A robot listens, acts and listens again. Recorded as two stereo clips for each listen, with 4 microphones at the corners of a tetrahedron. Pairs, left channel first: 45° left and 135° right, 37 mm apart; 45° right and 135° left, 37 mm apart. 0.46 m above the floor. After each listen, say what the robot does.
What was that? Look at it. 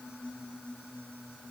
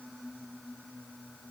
Keep listening.
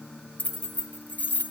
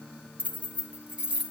Turn 80° left.
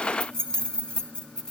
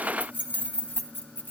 Turn 20° right.
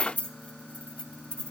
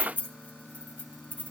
Turn 10° right.
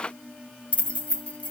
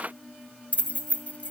Found it: keys jangling, straight ahead, 2 to 4 m away.